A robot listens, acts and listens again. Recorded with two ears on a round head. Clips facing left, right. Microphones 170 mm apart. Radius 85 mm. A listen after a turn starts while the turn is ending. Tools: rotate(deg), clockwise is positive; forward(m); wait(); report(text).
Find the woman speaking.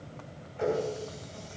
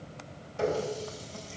wait()
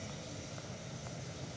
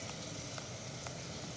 wait()
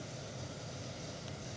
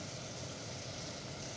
report("I can't make out a woman speaking, only a running tap.")